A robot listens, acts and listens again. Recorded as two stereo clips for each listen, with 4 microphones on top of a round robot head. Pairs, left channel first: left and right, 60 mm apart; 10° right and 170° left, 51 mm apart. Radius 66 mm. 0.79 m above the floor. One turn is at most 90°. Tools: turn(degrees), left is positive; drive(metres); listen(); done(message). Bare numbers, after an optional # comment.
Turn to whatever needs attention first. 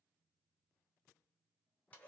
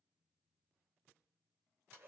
listen()
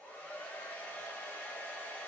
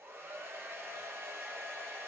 listen()
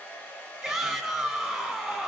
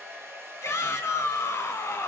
# The shout: 10° right.
turn(-10)
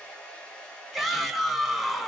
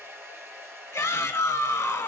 done("Facing the shout.")